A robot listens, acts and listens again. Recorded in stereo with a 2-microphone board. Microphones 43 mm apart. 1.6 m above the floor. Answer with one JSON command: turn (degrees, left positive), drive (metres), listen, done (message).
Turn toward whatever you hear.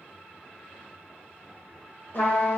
{"turn": 50}
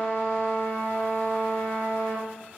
{"turn": 70}
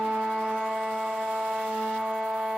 {"done": "Facing the trumpet."}